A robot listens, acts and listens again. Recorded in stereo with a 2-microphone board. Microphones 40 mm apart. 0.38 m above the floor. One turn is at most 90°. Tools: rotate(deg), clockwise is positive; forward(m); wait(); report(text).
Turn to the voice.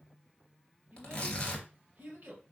rotate(50)
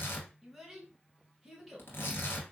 report("Found it: a child speaking, straight ahead.")